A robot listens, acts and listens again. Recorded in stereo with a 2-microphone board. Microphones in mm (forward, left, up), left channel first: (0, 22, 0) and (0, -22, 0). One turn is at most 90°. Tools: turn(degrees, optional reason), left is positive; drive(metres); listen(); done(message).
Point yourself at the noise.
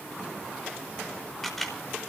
turn(degrees=30)
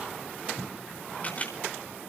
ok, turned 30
turn(degrees=90, reason="So it is at 145° left.")
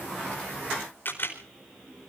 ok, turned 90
turn(degrees=50, reason="The camera shutter is now 50° left.")
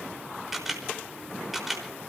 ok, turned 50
done("Found it: a camera shutter, straight ahead, over 4 m away.")